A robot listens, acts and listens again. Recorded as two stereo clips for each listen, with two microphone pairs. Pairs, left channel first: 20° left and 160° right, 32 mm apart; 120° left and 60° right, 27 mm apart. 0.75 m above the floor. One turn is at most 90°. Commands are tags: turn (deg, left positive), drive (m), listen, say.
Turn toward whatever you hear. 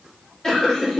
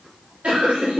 <turn deg="-45"/>
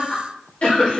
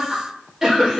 <say>Found it: laughter, straight ahead, 1 to 2 m away.</say>